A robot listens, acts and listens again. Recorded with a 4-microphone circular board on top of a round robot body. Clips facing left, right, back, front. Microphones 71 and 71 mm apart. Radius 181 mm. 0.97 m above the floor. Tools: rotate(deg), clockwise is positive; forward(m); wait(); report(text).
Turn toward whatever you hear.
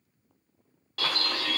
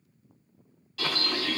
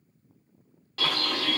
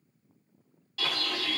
rotate(-135)
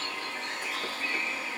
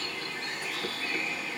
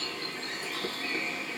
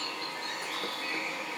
rotate(-20)
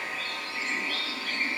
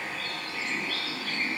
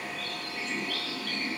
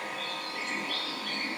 report("Found it: a bird, straight ahead, 1 to 2 m away.")